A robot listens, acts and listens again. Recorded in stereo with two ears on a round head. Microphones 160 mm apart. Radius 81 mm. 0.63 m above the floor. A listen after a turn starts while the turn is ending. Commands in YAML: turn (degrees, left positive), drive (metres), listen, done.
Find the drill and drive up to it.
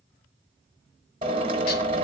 turn: -35
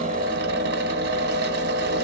turn: -110
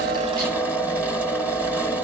turn: -10
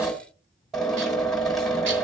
drive: 1.0
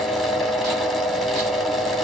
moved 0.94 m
drive: 1.0
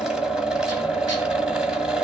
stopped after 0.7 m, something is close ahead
done: "I am next to the drill."